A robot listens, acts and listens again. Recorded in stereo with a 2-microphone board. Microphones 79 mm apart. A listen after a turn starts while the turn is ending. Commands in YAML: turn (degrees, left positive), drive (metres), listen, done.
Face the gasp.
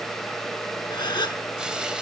turn: 70
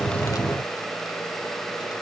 listen: true
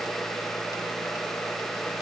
done: "I heard a gasp, but can't make it out now. It was about straight ahead or 40° left."